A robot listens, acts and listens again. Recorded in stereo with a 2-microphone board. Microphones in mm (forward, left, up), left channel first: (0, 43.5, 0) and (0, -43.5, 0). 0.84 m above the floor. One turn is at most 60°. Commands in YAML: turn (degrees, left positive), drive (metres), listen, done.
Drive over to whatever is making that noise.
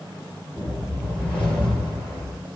turn: 30
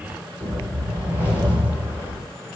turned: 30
turn: -20
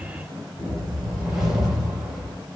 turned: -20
drive: 1.0
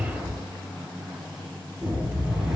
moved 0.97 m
drive: 1.0
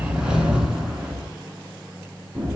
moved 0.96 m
turn: -10
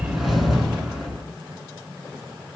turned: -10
drive: 1.0
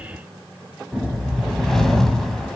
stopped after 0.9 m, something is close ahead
done: "I am next to the whoosh."